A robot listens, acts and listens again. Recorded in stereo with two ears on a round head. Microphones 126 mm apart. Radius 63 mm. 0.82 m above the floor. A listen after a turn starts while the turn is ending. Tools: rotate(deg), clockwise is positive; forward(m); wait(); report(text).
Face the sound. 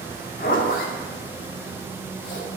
rotate(-65)
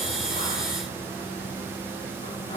rotate(-40)
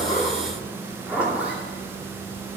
rotate(10)
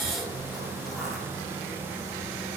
wait()
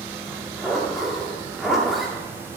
report("Facing the zipper, 2 to 4 m away.")